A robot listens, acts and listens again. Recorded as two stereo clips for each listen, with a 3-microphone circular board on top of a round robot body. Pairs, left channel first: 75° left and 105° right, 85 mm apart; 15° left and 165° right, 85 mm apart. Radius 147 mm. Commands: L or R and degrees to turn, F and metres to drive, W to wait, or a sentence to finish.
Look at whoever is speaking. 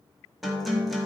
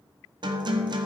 W
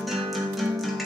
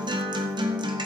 W
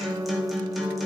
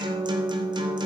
I can't make out anyone speaking, only a guitar.